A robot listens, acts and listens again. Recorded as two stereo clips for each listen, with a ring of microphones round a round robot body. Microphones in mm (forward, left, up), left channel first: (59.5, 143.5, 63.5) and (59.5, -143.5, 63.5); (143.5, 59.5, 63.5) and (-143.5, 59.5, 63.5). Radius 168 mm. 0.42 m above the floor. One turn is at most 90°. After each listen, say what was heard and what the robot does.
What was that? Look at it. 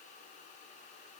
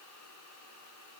Keep listening.
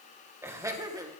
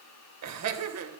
The laughter: 165° right. Turn 90° right.
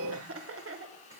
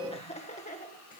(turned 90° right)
The laughter is now 55° right. Turn 55° right.
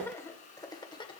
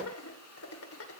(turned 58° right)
The laughter is now 20° left. Turn 20° left.
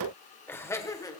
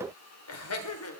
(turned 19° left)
The laughter is now 15° left. Turn 15° left.
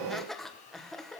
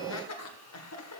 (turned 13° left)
Found it: laughter, straight ahead, 2 to 4 m away.